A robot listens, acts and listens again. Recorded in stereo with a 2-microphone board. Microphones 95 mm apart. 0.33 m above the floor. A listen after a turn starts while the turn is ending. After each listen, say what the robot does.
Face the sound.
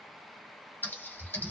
Turn 20° left.
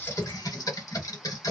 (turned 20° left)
Turn 130° left.
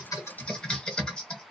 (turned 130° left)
Turn 10° left.
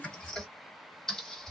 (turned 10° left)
Facing the typing on a keyboard, 1 to 2 m away.